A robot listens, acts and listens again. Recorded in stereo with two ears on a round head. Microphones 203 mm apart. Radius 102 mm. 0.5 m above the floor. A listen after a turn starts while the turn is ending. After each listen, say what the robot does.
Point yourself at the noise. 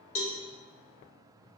Turn 60° left.
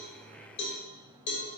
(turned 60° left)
Turn 50° left.
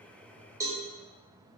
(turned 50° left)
Turn 15° right.
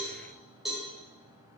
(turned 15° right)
Facing the cowbell, under 1 m away.